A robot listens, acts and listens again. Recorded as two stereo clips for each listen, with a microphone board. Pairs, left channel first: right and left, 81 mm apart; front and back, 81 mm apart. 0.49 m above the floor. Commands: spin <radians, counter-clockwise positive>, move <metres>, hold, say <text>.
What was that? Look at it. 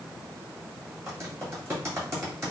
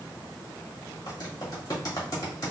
spin 0.61
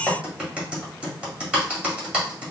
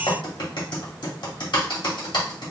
spin 0.26
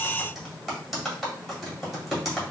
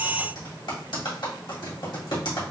say Facing the typing on a keyboard.